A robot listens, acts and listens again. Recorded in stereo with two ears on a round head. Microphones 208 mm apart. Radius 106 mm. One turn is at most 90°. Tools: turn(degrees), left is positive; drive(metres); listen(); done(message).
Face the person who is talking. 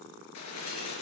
listen()
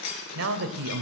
turn(degrees=-60)
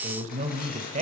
turn(degrees=-35)
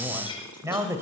turn(degrees=-15)
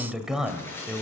done("Facing the man speaking.")